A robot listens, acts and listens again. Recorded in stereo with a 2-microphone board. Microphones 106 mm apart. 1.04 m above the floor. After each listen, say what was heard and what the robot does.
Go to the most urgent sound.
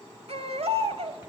Turn 90° right.
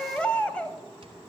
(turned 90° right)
So it is at 10° left. Turn 10° left.
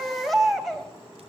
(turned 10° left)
Drive 1.0 m forward.
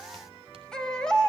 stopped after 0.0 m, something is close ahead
Blocked. The baby crying is further on, straight ahead.